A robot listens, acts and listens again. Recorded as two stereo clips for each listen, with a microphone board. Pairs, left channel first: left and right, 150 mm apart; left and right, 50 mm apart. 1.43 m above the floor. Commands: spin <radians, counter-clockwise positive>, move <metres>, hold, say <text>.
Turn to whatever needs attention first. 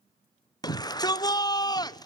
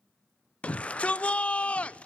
spin 0.44
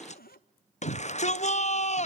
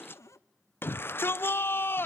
spin 2.18
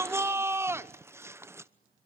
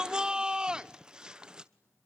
spin -0.26
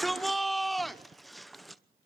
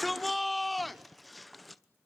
say Found it: a shout, straight ahead.